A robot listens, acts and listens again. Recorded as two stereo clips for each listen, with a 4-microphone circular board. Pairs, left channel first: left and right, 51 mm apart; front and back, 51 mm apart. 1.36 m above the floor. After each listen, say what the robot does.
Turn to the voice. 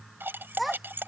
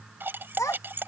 Facing the child speaking.